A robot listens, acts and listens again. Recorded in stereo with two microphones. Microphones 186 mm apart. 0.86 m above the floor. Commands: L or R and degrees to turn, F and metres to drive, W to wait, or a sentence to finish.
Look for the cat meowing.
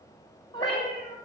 L35
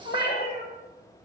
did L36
L110
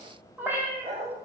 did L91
R15
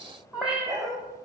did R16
Found it: a cat meowing, straight ahead.